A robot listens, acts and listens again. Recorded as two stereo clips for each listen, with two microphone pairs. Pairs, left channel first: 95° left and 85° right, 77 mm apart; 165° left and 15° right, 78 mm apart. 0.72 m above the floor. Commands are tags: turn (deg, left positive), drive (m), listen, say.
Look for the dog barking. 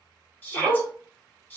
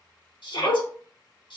<turn deg="-170"/>
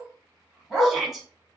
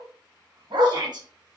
<say>Facing the dog barking, 1 to 2 m away.</say>